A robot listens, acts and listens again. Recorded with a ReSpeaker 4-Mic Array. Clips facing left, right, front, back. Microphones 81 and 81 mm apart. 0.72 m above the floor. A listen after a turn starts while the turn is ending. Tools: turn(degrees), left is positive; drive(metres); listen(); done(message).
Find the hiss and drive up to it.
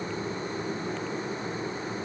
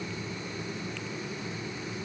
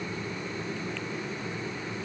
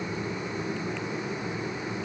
listen()
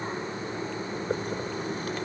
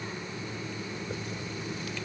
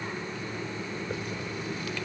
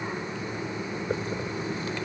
listen()
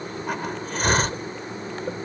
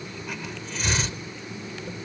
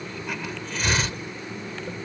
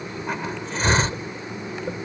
turn(degrees=125)
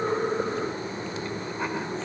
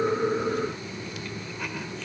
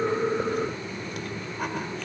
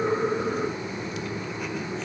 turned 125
listen()
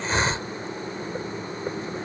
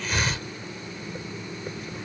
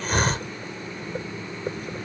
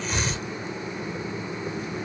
turn(degrees=30)
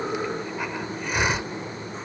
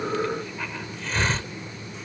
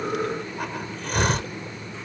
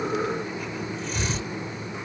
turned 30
turn(degrees=15)
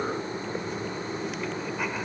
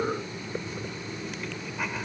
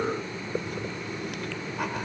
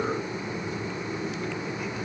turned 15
listen()
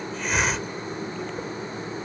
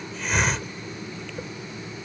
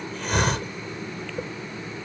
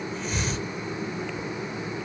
drive(metres=1.0)
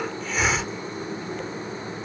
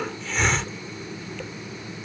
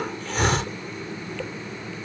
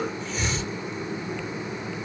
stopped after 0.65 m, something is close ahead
done("Something is in my way. I am facing the hiss but have not reached it.")